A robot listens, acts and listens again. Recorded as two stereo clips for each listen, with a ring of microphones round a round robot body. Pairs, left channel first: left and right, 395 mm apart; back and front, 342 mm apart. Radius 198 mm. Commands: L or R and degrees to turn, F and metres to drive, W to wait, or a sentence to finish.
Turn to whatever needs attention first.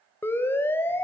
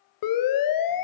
L175
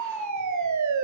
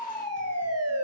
R50
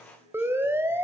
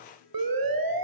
Found it: a siren, straight ahead, 2 to 4 m away.